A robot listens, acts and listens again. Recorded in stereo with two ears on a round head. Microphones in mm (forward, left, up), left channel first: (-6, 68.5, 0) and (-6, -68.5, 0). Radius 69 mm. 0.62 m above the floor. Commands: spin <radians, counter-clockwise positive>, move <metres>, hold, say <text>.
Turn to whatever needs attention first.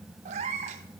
hold
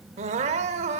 spin -0.79
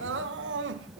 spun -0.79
spin -1.57
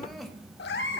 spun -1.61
hold
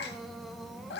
say Found it: crying, straight ahead, under 1 m away.